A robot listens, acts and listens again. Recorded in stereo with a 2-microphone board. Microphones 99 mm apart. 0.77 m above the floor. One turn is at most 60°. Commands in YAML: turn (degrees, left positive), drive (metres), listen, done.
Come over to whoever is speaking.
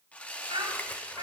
turn: -60
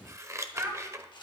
turn: -35
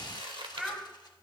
drive: 1.0
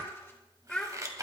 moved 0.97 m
turn: 10
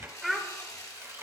drive: 1.0
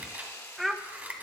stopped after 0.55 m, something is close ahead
done: "Arrived at the child speaking, straight ahead."